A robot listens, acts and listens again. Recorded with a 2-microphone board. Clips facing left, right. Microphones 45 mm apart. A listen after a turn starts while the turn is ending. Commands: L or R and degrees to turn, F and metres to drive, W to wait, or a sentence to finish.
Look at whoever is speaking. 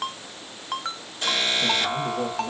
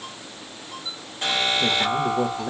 R90
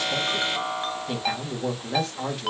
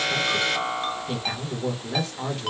Facing the man speaking.